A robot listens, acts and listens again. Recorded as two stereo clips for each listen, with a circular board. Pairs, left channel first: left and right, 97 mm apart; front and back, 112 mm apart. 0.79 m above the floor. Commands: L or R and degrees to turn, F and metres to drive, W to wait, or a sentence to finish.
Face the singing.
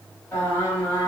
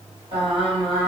L160
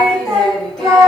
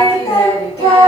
Found it: singing, straight ahead, 1 to 2 m away.